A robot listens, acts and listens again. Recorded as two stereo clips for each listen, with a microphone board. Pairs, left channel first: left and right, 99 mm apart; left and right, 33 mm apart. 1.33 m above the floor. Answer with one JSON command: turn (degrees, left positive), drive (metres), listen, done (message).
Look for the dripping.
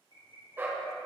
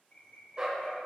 {"listen": true}
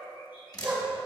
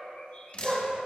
{"turn": 40}
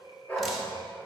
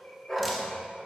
{"listen": true}
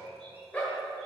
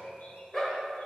{"listen": true}
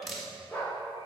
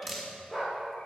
{"done": "Found it: dripping, straight ahead, 1 to 2 m away."}